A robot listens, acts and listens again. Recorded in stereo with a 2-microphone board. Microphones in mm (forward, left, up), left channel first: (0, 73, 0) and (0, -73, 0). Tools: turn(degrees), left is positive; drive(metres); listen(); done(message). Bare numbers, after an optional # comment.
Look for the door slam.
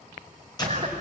# The door slam: about 30° left or 150° left.
turn(30)
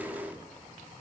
listen()
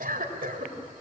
done("I heard a door slam, but can't make it out now. It was about straight ahead or 120° left.")